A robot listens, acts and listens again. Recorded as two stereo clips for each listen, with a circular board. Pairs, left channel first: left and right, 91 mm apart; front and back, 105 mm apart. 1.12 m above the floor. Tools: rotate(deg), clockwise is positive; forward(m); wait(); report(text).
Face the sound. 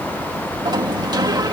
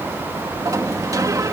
rotate(125)
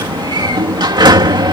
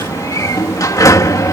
rotate(55)
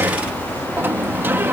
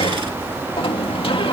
rotate(25)
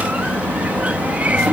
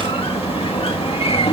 rotate(15)
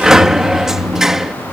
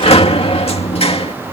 report("Facing the sliding door.")